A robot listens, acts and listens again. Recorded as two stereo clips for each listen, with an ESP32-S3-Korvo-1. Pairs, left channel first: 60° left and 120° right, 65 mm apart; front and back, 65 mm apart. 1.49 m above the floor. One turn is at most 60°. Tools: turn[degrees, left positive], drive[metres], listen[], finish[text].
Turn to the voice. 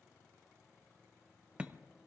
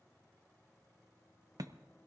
Action: listen[]
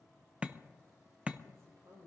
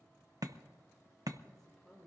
Thought: The woman speaking: 85° right.
Action: turn[-60]
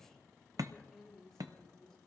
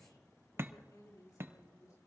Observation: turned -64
Thought: The woman speaking is now 25° right.
Action: turn[-25]
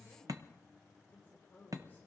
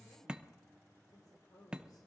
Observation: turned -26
Action: finish[Found it: a woman speaking, straight ahead.]